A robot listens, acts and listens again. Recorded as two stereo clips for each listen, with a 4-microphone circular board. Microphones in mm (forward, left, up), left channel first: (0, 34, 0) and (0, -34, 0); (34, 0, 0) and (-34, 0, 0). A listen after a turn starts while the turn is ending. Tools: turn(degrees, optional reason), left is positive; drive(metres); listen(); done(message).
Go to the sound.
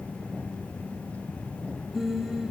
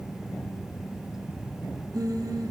turn(degrees=-175, reason="The singing: 175° right.")
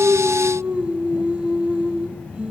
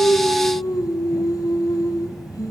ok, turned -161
turn(degrees=-15, reason="The singing is now 15° right.")
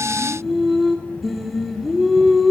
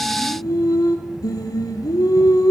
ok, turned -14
drive(metres=1.0)
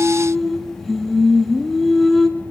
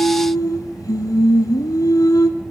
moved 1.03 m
drive(metres=1.0)
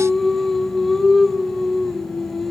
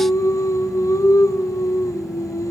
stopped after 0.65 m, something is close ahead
done("Arrived at the singing, straight ahead.")